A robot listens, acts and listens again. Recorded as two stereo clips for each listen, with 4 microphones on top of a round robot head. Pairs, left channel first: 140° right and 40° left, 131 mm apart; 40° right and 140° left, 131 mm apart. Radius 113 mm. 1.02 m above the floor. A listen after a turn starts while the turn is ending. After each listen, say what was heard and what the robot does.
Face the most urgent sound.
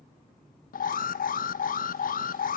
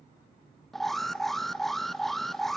The alarm: 130° right. Turn 130° right.
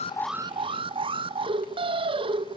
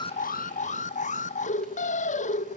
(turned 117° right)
The alarm is now 10° right. Turn 10° right.
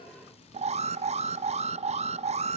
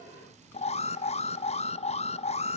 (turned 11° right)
Facing the alarm.